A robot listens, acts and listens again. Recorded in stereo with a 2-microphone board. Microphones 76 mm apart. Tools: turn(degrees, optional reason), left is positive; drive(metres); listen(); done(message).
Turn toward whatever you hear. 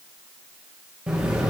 turn(degrees=-15, reason="The explosion: about 15° right or 165° right.")
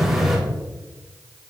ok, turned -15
done("Facing the explosion.")